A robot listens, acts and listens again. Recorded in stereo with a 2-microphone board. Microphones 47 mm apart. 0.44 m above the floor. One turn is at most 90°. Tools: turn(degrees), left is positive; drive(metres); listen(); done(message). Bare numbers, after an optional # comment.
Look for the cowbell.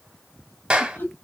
listen()
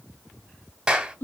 listen()
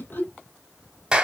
done("I can't make out a cowbell, only laughter and a clap.")